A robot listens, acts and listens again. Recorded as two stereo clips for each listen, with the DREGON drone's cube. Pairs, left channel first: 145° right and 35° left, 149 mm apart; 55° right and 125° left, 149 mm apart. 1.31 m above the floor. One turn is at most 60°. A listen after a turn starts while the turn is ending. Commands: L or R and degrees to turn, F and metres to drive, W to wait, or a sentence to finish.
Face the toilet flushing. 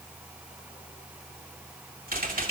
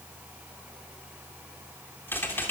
W
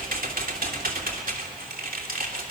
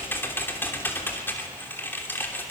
W
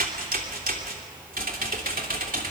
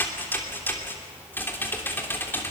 I can't make out a toilet flushing to turn to.